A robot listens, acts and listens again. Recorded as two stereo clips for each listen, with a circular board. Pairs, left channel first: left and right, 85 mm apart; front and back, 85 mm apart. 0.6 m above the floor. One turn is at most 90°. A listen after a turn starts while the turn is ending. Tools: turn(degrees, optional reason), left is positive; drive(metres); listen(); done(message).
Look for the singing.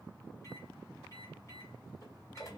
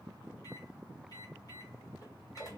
listen()
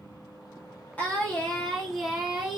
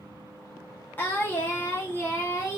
turn(degrees=-20, reason="The singing: 20° right.")
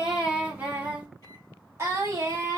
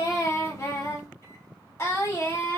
turn(degrees=-45, reason="The singing is now 45° right.")
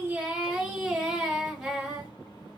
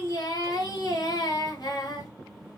done("Found it: singing, straight ahead, 1 to 2 m away.")